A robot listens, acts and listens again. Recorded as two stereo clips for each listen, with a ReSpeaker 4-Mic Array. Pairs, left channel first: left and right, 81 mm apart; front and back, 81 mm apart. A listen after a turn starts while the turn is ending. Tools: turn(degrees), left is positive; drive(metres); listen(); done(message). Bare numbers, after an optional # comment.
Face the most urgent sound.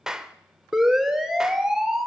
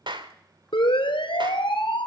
done("Found it: a siren, straight ahead.")